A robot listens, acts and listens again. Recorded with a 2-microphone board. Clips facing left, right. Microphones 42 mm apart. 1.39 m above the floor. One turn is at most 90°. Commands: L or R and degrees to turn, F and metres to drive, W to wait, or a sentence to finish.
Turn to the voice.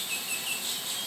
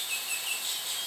W
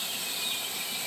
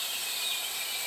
W
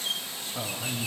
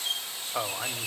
R60
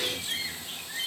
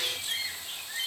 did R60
W
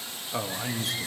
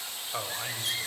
Facing the man speaking.